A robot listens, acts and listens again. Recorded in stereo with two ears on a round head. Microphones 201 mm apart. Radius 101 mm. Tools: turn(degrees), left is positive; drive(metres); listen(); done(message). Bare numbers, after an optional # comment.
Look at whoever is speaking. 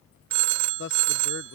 # The man speaking: about 50° left or 130° left.
turn(50)
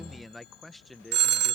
done("Facing the man speaking.")